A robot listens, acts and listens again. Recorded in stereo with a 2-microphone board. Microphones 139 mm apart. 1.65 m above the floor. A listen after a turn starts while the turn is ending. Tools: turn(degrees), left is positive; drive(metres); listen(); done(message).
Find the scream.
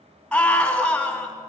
turn(degrees=30)
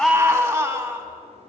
turn(degrees=-25)
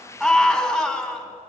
done("Found it: a scream, straight ahead.")